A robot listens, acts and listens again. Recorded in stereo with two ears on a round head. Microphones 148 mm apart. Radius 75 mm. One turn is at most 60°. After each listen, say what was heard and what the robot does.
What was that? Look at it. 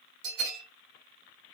Turn 60° right.
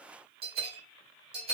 So it is at 35° right. Turn 35° right.
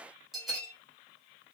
Found it: a bell, straight ahead.